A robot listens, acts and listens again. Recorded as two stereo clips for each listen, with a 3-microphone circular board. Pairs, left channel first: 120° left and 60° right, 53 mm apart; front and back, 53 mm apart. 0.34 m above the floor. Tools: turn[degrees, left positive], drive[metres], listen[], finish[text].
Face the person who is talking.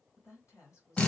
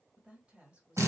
Thought: The woman speaking: 115° left.
Action: turn[115]
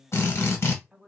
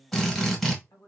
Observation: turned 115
Thought: The woman speaking is now 15° left.
Action: turn[15]
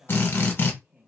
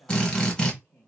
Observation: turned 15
Action: finish[Found it: a woman speaking, straight ahead, 2 to 4 m away.]